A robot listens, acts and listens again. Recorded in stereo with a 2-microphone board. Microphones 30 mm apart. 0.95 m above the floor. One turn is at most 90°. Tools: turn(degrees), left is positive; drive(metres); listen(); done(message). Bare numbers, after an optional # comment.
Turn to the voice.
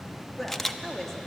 turn(30)
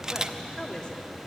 # So it is at 145° left.
turn(90)
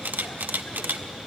# Nothing new. It was at 55° left.
turn(55)
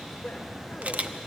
# The woman speaking is now 40° left.
turn(40)
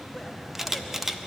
listen()
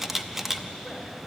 listen()
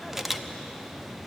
done("I heard a woman speaking from this way, but can't make it out now.")